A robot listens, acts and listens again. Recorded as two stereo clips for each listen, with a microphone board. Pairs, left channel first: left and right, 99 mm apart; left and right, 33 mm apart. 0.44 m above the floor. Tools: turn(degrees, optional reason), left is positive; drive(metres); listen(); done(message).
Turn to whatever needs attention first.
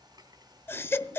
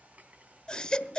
turn(degrees=20, reason="The baby crying: about 20° left or 160° left.")
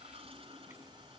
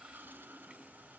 listen()
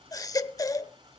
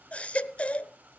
turn(degrees=135, reason="So it is at 135° left.")
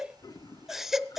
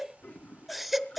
done("Found it: a baby crying, straight ahead, under 1 m away.")